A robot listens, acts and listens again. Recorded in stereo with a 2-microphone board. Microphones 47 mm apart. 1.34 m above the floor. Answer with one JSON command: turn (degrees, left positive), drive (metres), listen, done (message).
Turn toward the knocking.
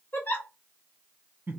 {"listen": true}
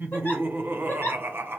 {"listen": true}
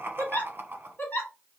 {"done": "I can't make out knocking, only laughter and a giggle."}